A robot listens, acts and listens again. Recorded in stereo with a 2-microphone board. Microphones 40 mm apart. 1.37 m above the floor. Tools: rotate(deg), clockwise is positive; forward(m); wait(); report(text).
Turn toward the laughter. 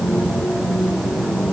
wait()
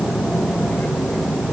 wait()
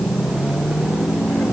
report("I can't make out laughter to turn to.")